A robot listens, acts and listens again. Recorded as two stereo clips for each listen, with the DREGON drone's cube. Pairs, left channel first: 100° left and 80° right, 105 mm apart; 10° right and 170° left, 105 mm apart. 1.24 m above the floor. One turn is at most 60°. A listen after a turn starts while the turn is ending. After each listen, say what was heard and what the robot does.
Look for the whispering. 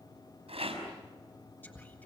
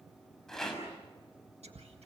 The whispering: 175° left. Turn 60° left.
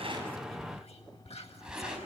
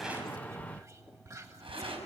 The whispering is now 110° left. Turn 60° left.
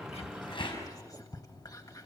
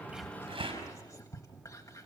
The whispering is now 45° left. Turn 45° left.
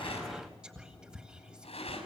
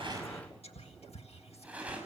Facing the whispering, 1 to 2 m away.